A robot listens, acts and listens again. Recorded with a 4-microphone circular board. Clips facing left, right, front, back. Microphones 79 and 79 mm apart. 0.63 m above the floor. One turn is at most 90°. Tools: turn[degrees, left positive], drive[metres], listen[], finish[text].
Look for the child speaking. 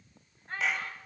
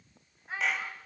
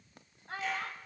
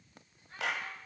Action: finish[Facing the child speaking.]